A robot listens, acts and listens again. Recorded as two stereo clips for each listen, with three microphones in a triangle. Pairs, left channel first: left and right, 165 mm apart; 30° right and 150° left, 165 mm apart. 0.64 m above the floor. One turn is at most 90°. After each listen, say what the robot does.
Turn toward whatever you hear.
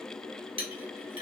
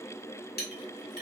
Turn 35° right.
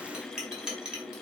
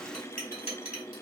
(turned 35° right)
Found it: a clink, straight ahead, 1 to 2 m away.